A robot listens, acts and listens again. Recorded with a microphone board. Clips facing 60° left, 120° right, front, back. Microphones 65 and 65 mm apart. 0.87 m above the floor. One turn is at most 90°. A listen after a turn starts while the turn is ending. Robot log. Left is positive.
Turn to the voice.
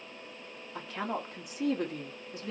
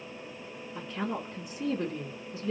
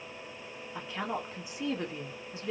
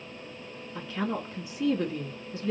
note: The woman speaking: 65° left.
cmd yaw +65
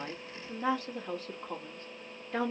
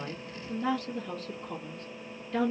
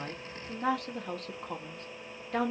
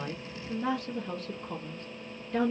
end: Found it: a woman speaking, straight ahead.